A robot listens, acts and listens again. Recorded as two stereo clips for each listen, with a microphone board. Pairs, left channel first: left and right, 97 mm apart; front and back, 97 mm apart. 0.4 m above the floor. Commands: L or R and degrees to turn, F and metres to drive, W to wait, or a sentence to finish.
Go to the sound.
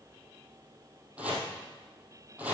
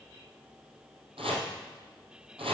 R165
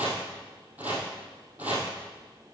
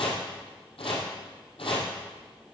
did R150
R15
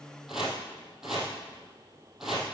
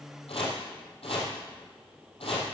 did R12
F1.0
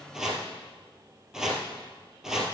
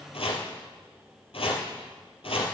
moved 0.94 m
F1.0
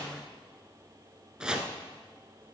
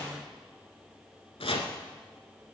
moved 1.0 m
R10
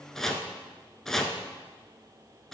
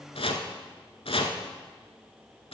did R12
F1.0
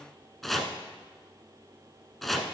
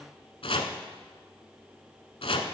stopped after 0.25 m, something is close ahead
Arrived at the chopping, straight ahead.